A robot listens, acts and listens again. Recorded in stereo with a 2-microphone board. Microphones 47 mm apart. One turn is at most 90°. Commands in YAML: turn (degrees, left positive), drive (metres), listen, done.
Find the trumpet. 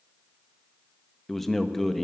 listen: true
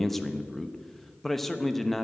listen: true
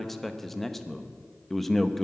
done: "I can't make out a trumpet, only a man speaking."